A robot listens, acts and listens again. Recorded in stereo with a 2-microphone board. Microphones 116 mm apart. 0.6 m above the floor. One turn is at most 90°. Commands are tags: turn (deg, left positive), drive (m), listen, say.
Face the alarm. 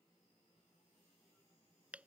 <listen/>
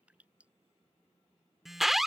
<turn deg="30"/>
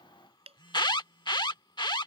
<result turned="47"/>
<turn deg="90"/>
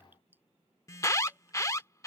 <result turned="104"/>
<turn deg="30"/>
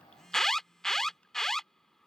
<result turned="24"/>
<say>Facing the alarm.</say>